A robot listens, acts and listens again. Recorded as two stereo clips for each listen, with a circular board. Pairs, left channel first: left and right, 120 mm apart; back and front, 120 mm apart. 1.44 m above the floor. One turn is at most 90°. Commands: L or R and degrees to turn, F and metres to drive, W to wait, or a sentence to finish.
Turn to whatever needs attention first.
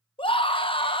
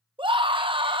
L45
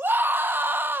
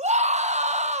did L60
R15
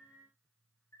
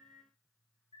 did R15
W
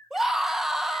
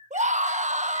Facing the scream.